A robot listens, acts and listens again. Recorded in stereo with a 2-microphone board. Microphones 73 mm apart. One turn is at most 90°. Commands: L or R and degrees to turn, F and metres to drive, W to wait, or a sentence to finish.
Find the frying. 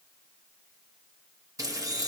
R50
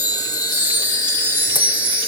W
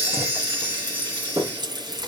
R80
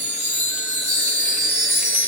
W
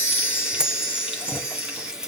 R10
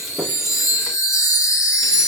Facing the frying, 2 to 4 m away.